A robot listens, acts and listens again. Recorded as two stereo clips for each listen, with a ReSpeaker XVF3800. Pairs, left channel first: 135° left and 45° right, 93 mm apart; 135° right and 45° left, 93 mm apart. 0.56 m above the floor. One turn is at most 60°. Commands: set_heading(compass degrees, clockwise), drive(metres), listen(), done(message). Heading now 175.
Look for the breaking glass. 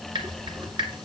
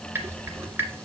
listen()
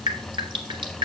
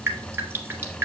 listen()
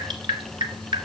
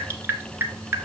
done("I can't make out breaking glass, only dripping.")